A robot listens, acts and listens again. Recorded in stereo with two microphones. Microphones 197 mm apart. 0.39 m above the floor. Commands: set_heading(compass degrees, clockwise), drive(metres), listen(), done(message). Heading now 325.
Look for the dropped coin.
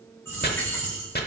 set_heading(295)
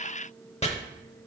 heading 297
listen()
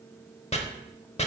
done("I heard a dropped coin, but can't make it out now. It was about 15° right or 140° left.")